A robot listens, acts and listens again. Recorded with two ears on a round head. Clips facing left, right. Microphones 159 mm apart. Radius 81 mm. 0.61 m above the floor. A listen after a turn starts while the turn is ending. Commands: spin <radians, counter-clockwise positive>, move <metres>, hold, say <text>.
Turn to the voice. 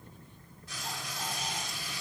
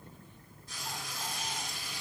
hold
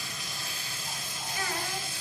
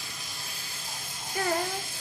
spin -0.61
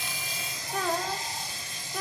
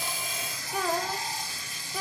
say Facing the child speaking.